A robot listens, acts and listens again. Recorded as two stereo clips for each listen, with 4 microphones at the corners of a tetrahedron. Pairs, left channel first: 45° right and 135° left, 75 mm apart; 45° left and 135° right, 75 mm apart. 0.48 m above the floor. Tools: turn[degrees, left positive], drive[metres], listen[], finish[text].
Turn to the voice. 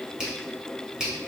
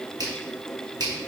Action: listen[]
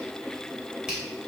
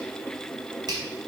Action: listen[]
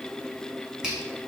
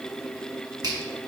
Action: finish[I can't make out anyone speaking to turn to.]